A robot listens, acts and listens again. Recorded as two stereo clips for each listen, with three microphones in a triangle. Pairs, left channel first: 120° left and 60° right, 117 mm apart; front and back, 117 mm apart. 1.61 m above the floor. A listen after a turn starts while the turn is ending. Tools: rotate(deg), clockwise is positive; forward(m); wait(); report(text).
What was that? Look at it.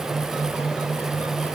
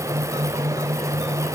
wait()
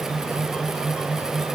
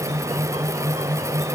wait()
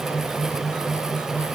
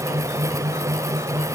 report("I can't make out anything to turn to.")